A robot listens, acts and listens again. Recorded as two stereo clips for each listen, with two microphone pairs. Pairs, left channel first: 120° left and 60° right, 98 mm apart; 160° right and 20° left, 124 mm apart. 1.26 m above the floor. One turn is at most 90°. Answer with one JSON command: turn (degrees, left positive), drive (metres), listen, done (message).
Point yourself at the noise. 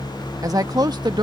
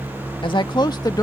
{"turn": -90}
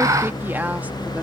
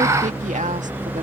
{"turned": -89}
{"turn": 15}
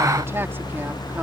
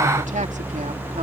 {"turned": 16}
{"listen": true}
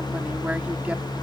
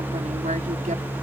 {"listen": true}
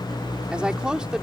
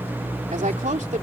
{"turn": 25}
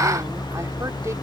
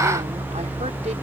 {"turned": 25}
{"listen": true}
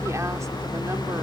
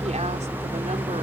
{"listen": true}
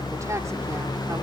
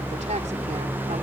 {"done": "I heard a woman speaking from this way, but can't make it out now."}